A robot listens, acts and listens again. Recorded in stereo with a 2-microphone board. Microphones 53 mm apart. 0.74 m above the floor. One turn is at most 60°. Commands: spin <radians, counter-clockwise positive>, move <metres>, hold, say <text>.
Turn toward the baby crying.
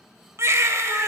spin -1.05
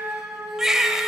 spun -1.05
spin -0.17
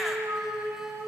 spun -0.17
hold
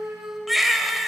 say Found it: a baby crying, straight ahead, 1 to 2 m away.